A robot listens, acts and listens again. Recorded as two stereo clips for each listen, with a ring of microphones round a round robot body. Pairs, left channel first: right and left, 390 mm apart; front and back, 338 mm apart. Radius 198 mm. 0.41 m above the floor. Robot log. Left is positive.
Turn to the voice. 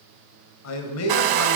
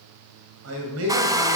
note: The man speaking: 135° right.
cmd yaw -135
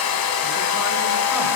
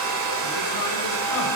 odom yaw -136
cmd idle
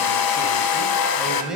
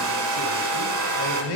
end: Found it: a man speaking, straight ahead.